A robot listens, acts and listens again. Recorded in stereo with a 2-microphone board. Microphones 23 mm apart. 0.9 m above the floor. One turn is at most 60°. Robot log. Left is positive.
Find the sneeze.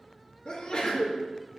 note: The sneeze: about 35° left or 145° left.
cmd yaw +35
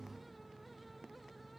cmd idle
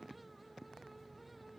end: I heard a sneeze, but can't make it out now. It was about straight ahead or 110° left.